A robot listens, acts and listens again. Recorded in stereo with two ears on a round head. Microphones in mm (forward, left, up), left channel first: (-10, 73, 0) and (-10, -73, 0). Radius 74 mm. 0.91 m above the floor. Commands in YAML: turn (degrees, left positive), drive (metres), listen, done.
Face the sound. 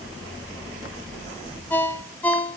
turn: 30
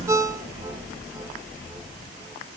turn: -15
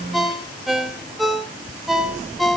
done: "Facing the ringtone, 1 to 2 m away."